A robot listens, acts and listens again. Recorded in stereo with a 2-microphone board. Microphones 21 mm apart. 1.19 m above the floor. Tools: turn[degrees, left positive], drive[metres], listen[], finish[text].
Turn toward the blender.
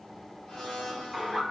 Thought: The blender: about 40° left or 140° left.
Action: turn[40]
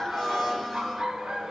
Action: finish[Found it: a blender, straight ahead, 1 to 2 m away.]